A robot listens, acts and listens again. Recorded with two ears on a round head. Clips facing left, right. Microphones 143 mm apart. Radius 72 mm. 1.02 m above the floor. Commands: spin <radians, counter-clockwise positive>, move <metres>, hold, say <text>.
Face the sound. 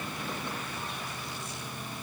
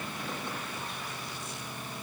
hold
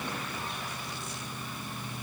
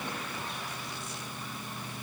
hold
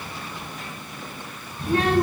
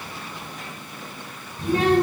spin -1.57
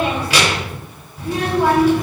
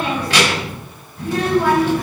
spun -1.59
say Facing the child speaking, over 4 m away.